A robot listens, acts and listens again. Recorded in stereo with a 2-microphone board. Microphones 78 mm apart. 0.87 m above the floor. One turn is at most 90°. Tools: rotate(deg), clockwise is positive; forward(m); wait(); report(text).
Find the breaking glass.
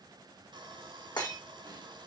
rotate(-70)
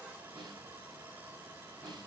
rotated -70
wait()
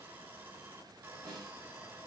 report("I heard breaking glass, but can't make it out now. It was about straight ahead or 40° left.")